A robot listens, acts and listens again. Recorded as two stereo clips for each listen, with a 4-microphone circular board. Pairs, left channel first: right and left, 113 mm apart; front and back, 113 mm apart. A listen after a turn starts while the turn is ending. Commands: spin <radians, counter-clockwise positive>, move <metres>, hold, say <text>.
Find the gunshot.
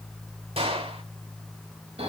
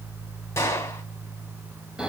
spin 1.13
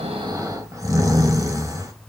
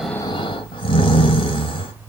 say Facing where the gunshot came from. I can't hear it now.